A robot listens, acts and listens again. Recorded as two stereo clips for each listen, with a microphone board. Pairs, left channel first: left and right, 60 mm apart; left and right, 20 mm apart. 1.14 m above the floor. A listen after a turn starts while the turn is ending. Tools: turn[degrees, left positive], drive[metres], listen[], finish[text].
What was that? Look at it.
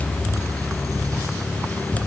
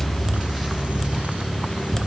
Action: listen[]
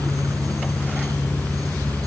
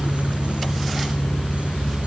Action: listen[]
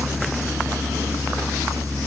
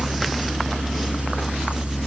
Action: finish[I can't make out anything to turn to.]